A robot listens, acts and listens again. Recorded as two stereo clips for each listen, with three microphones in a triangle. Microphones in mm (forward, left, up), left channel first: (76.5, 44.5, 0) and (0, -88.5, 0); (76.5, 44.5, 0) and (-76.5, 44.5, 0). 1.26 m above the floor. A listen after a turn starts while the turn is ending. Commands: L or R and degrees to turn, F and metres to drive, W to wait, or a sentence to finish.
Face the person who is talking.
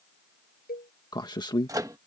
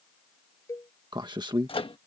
L120
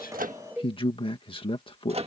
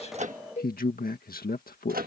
Facing the man speaking.